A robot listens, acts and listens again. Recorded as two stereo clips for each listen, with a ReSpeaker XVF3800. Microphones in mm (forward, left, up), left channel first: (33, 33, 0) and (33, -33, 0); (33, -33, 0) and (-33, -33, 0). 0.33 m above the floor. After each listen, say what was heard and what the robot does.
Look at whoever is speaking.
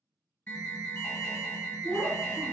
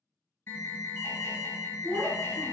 The child speaking: 155° left. Turn 155° left.
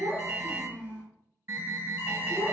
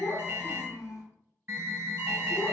The child speaking is now 15° right. Turn 15° right.
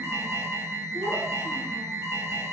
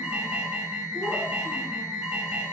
Keep listening.
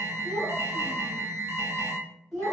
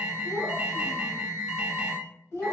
Found it: a child speaking, straight ahead, 1 to 2 m away.